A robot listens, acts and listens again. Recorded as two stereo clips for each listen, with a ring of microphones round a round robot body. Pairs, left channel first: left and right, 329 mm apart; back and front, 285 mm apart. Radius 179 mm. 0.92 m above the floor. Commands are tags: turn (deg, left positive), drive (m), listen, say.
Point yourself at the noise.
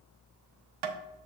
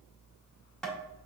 <turn deg="-95"/>
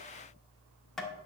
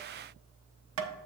<say>Facing the tapping.</say>